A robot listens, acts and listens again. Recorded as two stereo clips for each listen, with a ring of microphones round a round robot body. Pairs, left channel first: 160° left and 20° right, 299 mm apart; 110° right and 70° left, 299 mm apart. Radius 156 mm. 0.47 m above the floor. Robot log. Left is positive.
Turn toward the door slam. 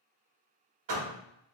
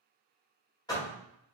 note: The door slam: 35° right.
cmd yaw -35
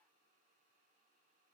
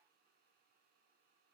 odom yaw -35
end: I heard a door slam from this way, but can't make it out now.